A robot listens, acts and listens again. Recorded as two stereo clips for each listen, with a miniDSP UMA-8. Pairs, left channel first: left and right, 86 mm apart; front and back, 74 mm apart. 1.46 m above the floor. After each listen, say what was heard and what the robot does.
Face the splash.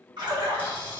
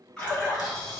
The splash: 75° right. Turn 75° right.
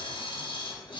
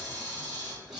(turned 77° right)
Facing where the splash came from. I can't hear it now.